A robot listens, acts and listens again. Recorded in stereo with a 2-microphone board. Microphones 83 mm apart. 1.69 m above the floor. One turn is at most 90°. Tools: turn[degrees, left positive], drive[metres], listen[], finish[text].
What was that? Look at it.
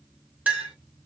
Thought: The clink: about 20° right or 160° right.
Action: turn[-20]
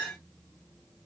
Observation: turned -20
Action: finish[Facing the clink.]